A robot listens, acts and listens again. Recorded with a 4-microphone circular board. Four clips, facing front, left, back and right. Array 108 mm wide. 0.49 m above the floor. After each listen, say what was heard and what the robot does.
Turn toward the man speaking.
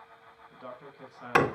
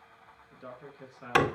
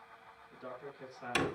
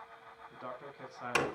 The man speaking: 60° right. Turn 60° right.
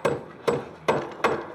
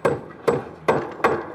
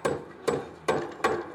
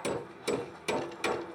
Keep listening.
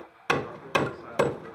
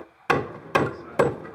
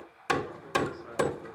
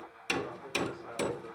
Keep listening.
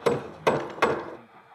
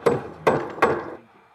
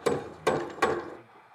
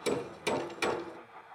I heard a man speaking from this way, but can't make it out now.